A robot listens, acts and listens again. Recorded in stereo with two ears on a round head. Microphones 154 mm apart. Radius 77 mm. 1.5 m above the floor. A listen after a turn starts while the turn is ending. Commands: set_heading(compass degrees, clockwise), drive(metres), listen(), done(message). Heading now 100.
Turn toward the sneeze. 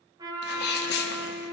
set_heading(35)
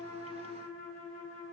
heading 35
listen()
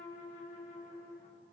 done("I heard a sneeze, but can't make it out now. It was about straight ahead or 50° left.")